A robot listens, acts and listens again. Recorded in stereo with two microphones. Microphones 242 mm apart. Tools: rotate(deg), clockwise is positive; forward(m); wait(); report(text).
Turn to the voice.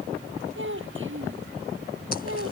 rotate(55)
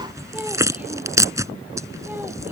wait()
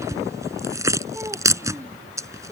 wait()
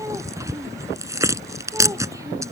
report("I heard a child speaking, but can't make it out now. It was about straight ahead or 70° right.")